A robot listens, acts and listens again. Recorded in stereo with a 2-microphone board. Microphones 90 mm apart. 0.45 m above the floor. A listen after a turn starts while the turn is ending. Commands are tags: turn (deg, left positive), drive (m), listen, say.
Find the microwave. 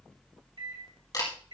<turn deg="-65"/>
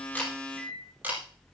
<turn deg="-20"/>
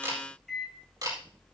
<say>Facing the microwave.</say>